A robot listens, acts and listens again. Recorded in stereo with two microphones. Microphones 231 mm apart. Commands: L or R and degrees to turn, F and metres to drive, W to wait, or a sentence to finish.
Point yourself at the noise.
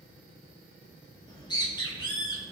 L20
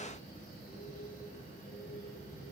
L145
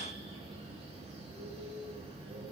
R25
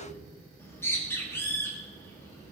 L10
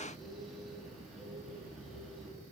Found it: a bird, straight ahead, 2 to 4 m away.